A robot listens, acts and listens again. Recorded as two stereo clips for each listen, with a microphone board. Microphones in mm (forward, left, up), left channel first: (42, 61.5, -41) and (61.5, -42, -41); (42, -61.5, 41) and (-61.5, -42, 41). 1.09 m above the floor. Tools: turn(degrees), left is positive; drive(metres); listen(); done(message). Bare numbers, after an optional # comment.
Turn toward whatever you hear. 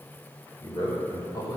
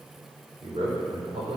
# The man speaking: 150° left.
turn(150)
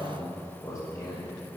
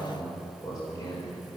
# The man speaking is now 45° left.
turn(45)
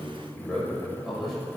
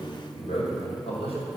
# The man speaking is now 10° left.
turn(10)
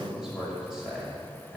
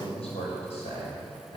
done("Facing the man speaking.")